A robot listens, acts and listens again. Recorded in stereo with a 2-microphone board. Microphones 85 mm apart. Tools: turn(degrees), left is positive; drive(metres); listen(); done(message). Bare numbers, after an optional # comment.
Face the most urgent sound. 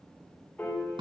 listen()
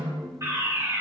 # The fire alarm: about 35° right or 145° right.
turn(-35)
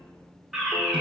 done("Found it: a fire alarm, straight ahead.")